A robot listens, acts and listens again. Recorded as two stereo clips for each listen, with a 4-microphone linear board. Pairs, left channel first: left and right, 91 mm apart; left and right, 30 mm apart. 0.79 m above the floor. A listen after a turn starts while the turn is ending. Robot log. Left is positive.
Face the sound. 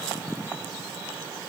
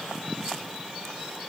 cmd idle
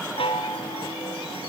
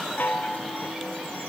note: The chime: about 75° left or 105° left.
cmd yaw +75
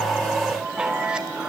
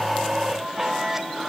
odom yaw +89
note: So it is at 10° right.
cmd yaw -10
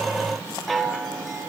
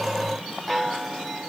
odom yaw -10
end: Found it: a chime, straight ahead.